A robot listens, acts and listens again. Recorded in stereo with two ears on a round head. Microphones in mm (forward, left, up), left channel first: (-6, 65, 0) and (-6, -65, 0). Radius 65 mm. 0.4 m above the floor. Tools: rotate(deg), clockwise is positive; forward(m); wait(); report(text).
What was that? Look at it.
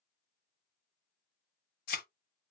rotate(-65)
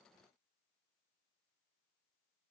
wait()
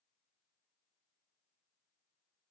report("I heard a thud, but can't make it out now. It was about straight ahead or 50° left.")